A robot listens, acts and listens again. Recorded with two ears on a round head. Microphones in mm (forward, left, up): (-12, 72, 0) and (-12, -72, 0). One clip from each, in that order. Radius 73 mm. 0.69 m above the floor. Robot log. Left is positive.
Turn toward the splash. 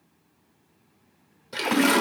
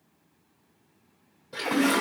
note: The splash: about 55° left or 125° left.
cmd yaw +55
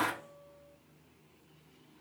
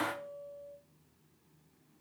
note: So it is at 55° left.
cmd yaw +55
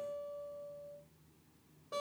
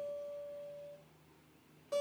end: I heard a splash from this way, but can't make it out now.